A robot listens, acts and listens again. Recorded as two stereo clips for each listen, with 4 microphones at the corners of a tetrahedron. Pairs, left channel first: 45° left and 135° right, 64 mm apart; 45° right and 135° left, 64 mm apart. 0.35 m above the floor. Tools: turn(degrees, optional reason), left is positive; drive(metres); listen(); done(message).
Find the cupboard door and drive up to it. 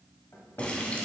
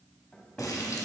turn(degrees=20, reason="The cupboard door: 20° left.")
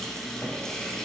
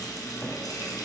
listen()
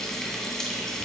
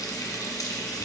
listen()
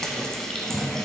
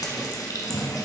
done("I heard a cupboard door from this way, but can't make it out now. I did not reach it.")